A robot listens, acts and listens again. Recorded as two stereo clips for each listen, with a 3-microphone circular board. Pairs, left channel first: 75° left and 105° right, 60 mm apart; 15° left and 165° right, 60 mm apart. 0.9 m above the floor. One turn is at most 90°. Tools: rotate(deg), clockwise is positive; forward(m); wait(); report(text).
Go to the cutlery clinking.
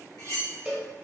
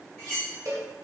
rotate(-80)
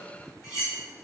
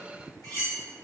rotate(-35)
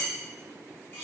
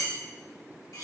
rotate(-25)
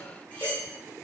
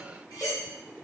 forward(1.0)
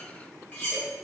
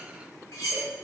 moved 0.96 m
rotate(-10)
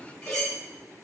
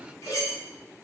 forward(1.0)
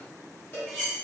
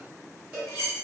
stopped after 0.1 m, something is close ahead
rotate(10)
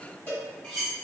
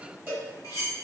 report("Arrived at the cutlery clinking, straight ahead.")